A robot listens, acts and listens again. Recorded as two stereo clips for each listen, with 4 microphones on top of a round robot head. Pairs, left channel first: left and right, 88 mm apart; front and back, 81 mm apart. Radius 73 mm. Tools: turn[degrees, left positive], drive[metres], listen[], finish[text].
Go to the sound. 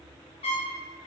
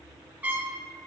Thought: The trumpet: 110° left.
Action: turn[110]
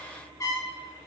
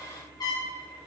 Thought: The trumpet is now 35° left.
Action: turn[35]
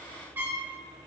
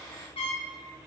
Thought: The trumpet is now 25° right.
Action: turn[-25]
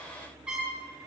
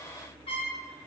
Thought: The trumpet is now 15° right.
Action: turn[-15]
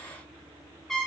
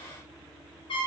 Action: drive[1.0]
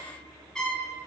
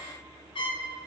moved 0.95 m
Action: drive[1.0]
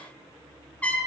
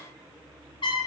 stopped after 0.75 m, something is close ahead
Thought: The trumpet is now 15° left.
Action: turn[15]
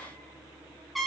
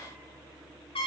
Action: finish[I am next to the trumpet.]